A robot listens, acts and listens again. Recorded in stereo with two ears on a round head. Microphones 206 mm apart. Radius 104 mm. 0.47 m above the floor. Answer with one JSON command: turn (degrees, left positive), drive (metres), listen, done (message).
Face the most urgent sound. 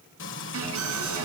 {"turn": -90}
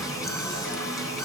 {"done": "Facing the alarm, over 4 m away."}